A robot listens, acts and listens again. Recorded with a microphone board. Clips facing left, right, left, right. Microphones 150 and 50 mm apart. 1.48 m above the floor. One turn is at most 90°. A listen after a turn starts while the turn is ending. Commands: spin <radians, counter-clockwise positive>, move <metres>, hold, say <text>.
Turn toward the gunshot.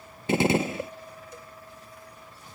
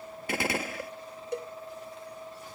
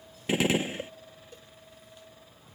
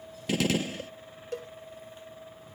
spin 0.44
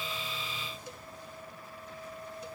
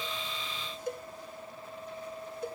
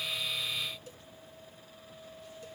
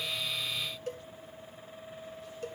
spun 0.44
hold
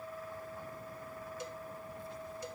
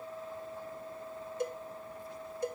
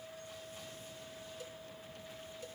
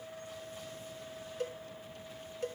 say I heard a gunshot, but can't make it out now. It was about straight ahead or 130° left.